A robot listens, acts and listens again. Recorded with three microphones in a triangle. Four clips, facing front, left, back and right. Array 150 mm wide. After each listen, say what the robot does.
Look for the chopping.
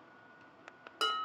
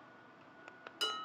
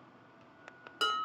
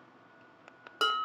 Keep listening.
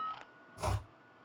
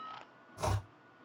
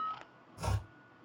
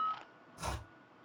Turn 60° left.
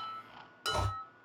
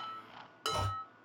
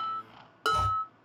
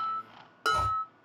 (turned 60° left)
Facing the chopping.